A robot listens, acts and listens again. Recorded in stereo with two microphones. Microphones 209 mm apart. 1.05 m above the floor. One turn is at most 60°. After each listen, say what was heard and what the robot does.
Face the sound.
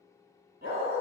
The dog barking: about 50° right or 130° right. Turn 50° right.
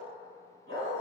So it is at 75° right. Turn 60° right.
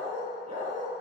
The dog barking is now 35° right. Turn 35° right.
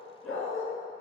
Facing the dog barking.